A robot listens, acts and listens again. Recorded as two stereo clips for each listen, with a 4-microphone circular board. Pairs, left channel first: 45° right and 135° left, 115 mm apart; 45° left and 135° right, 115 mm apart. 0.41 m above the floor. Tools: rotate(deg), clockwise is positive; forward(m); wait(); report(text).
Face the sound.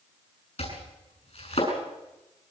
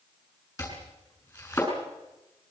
rotate(15)
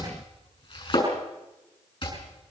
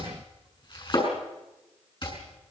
report("Found it: chopping, straight ahead, over 4 m away.")